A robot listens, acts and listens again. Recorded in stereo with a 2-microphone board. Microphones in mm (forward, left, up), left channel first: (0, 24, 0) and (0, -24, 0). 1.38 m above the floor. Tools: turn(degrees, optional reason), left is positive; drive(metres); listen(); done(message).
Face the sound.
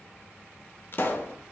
turn(degrees=45, reason="The pop: about 45° left or 135° left.")
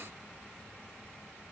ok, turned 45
listen()
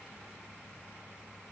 done("I heard a pop, but can't make it out now. It was about straight ahead or 90° left.")